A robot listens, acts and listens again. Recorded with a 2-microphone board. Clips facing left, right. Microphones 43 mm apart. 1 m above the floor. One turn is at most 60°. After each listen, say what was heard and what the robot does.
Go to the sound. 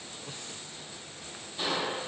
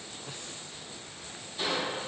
Turn 30° left.
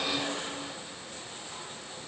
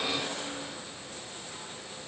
So it is at 140° left. Turn 60° left.
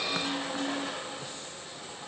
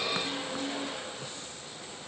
The crushing is now 80° left. Turn 60° left.
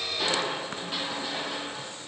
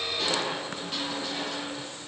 The crushing is now 10° left. Turn 10° left.
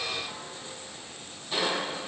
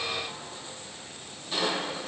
Drive 1.0 m forward.
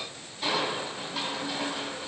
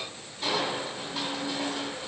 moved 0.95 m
Drive 1.0 m forward.
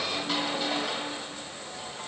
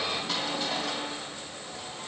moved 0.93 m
Drive 1.0 m forward.
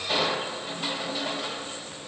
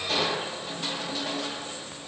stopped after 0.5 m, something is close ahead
The crushing is now 15° left. Turn 15° left.
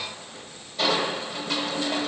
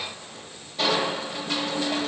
I am next to the crushing.